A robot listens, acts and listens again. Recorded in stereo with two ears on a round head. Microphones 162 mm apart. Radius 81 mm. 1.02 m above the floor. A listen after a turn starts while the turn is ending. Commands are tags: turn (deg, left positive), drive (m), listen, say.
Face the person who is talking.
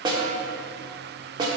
<listen/>
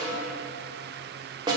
<listen/>
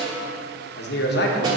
<turn deg="65"/>
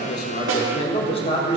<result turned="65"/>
<turn deg="35"/>
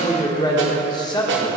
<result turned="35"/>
<turn deg="25"/>
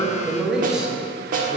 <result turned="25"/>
<say>Found it: a man speaking, straight ahead.</say>